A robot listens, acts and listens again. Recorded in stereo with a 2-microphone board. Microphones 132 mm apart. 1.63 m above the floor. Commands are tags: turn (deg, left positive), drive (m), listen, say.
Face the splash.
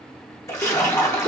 <turn deg="20"/>
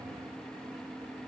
<listen/>
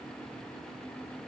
<say>I heard a splash, but can't make it out now. It was about straight ahead or 140° left.</say>